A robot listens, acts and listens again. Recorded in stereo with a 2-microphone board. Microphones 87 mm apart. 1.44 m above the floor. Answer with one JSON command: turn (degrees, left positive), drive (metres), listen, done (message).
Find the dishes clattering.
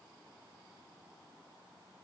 {"listen": true}
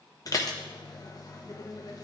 {"turn": 45}
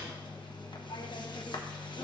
{"turn": 85}
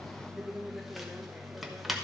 {"done": "Facing the dishes clattering, under 1 m away."}